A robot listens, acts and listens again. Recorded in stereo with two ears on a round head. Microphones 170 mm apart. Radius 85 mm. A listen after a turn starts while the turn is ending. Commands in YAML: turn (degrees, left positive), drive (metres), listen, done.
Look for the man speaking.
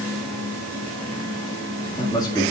turn: 20
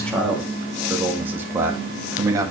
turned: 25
turn: -20
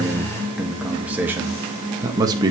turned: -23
turn: -20
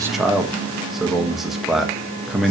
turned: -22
done: "Found it: a man speaking, straight ahead, 1 to 2 m away."